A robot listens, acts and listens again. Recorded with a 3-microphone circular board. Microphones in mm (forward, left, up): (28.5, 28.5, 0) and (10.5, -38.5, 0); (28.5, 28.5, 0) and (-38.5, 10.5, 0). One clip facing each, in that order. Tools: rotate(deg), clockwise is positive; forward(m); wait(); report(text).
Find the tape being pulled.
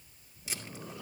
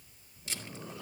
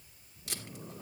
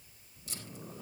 rotate(10)
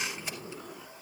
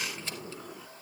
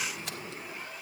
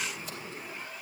wait()
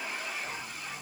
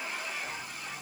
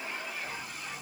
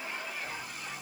wait()
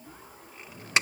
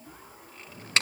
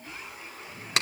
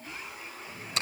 report("Facing the tape being pulled.")